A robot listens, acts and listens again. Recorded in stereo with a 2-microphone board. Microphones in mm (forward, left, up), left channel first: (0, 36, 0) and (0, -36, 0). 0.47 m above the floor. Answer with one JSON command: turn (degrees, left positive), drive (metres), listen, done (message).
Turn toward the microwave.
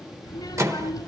{"turn": -45}
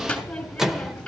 {"turn": -10}
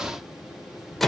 {"done": "Facing the microwave."}